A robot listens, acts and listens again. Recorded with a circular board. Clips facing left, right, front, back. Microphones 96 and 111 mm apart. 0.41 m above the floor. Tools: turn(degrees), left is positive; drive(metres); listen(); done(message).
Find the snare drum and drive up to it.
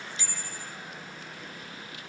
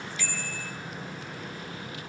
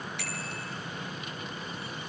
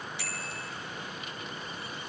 listen()
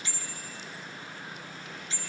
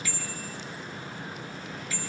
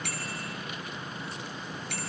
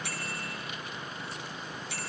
listen()
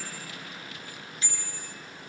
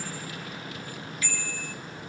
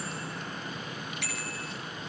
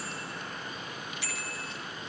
done("I can't make out a snare drum to turn to.")